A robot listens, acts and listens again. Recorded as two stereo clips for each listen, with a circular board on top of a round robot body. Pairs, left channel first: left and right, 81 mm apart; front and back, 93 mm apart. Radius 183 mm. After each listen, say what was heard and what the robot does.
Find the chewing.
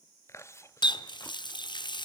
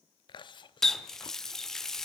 The chewing: 35° left. Turn 35° left.
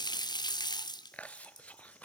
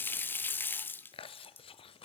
The chewing is now 15° left. Turn 15° left.
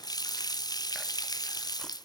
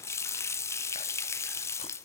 Keep listening.
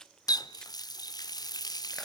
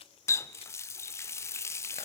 Found it: chewing, straight ahead.